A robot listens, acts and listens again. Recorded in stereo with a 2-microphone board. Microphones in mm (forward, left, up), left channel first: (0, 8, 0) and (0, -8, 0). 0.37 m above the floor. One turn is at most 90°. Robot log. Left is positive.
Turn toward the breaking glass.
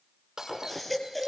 note: The breaking glass: about 35° right or 145° right.
cmd yaw -35
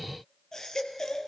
cmd idle
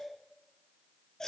end: I heard breaking glass, but can't make it out now. It was about straight ahead or 110° right.